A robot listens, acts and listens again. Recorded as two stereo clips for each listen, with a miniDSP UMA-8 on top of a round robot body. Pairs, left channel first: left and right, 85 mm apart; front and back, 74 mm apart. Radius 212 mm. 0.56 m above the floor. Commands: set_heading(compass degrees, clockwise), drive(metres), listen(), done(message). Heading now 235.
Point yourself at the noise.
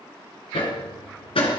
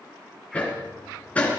set_heading(160)
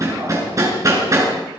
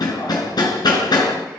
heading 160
set_heading(190)
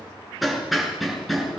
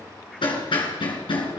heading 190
done("Found it: hammering, straight ahead.")